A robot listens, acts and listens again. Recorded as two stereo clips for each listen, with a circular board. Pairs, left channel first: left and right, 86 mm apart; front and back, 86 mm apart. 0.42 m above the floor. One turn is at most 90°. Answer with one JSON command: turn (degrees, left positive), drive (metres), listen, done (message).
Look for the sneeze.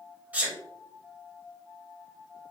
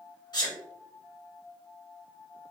{"turn": -20}
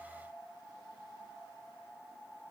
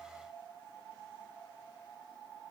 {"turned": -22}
{"done": "I heard a sneeze from this way, but can't make it out now."}